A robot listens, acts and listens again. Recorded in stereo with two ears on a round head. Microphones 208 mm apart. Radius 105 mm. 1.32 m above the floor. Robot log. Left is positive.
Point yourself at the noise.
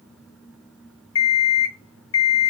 note: The alarm clock: about 65° left or 115° left.
cmd yaw +65
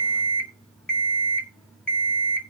end: Found it: an alarm clock, straight ahead, 1 to 2 m away.